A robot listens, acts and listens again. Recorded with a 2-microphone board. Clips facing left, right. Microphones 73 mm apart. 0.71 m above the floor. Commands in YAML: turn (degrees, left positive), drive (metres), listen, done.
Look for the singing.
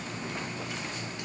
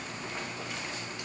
listen: true
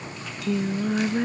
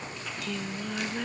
turn: 20
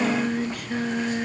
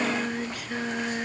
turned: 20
done: "Found it: singing, straight ahead."